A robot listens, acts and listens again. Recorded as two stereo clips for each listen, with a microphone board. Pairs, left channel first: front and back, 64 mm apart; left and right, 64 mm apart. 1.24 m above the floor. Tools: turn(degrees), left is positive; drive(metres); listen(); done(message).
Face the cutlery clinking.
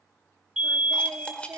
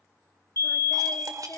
turn(degrees=-75)
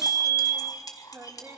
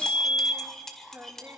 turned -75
done("Found it: cutlery clinking, straight ahead, 2 to 4 m away.")